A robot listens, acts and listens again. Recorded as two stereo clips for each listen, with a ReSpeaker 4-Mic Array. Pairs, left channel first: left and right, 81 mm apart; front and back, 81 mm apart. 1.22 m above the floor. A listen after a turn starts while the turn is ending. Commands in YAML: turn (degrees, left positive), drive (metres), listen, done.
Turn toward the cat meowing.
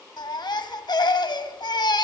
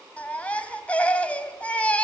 listen: true
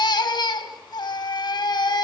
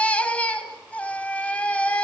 listen: true
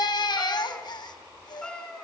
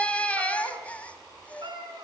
turn: 170
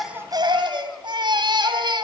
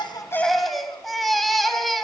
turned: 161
turn: 10
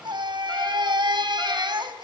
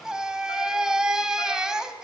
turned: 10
listen: true
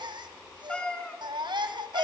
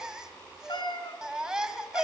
turn: 15
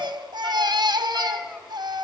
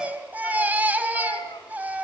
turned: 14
done: "Facing the cat meowing."